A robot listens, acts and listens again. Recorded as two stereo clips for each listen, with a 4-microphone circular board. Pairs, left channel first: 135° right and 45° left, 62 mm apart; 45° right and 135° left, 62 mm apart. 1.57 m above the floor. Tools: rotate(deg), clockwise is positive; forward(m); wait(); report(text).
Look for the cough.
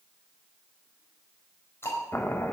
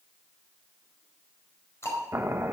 wait()
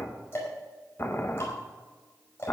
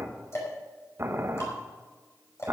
wait()
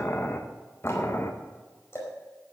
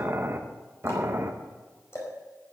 report("I can't make out a cough, only ticking and boiling.")